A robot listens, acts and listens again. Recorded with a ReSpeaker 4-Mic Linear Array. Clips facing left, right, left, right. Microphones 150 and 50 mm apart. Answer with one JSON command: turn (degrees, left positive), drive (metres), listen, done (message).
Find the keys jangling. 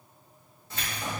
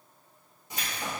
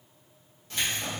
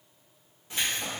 {"turn": -30}
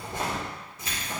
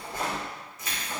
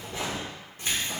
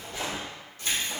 {"turn": 35}
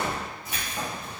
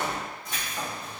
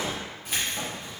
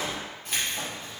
{"turn": 10}
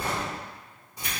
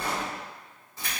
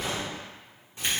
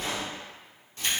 {"turn": 20}
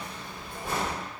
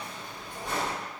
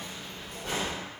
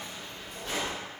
{"turn": 10}
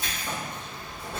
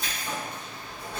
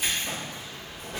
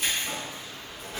{"done": "Facing the keys jangling, 2 to 4 m away."}